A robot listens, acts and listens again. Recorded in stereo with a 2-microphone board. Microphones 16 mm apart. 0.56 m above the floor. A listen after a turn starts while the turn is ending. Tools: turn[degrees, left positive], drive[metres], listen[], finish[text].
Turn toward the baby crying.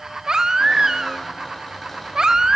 Thought: The baby crying: about 55° right or 125° right.
Action: turn[-55]
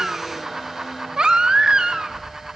Thought: So it is at 70° right.
Action: turn[-70]
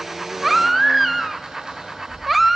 Action: finish[Facing the baby crying, 1 to 2 m away.]